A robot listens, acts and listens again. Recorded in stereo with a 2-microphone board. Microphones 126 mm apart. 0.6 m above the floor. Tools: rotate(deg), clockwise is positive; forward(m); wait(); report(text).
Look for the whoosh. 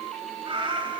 wait()
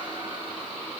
wait()
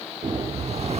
rotate(60)
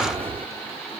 rotate(55)
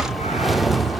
report("Facing the whoosh.")